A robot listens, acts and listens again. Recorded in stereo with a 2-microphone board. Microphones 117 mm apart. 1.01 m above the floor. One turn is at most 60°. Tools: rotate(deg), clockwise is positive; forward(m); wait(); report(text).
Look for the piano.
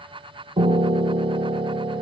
rotate(55)
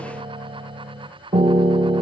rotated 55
rotate(60)
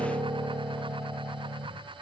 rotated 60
rotate(15)
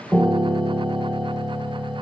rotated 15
report("Found it: a piano, straight ahead.")